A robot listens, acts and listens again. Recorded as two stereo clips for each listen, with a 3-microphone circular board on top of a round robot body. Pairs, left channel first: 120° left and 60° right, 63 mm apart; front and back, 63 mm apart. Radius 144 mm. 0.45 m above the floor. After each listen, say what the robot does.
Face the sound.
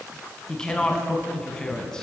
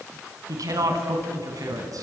Turn 160° right.
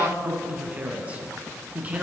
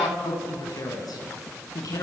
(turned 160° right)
Found it: a woman speaking, straight ahead.